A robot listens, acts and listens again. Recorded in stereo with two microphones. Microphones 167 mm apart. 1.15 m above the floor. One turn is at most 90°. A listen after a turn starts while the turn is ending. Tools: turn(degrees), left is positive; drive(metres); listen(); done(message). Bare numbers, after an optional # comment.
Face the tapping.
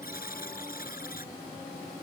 listen()
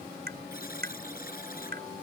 # The tapping: about 75° right or 105° right.
turn(-75)
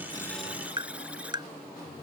# So it is at 25° right.
turn(-25)
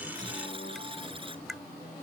done("Found it: tapping, straight ahead.")